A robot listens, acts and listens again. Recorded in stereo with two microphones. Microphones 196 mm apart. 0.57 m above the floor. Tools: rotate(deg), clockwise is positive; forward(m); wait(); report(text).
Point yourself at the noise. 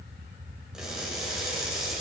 rotate(30)
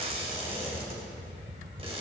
rotate(150)
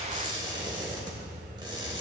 rotate(25)
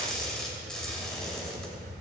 report("Facing the crushing.")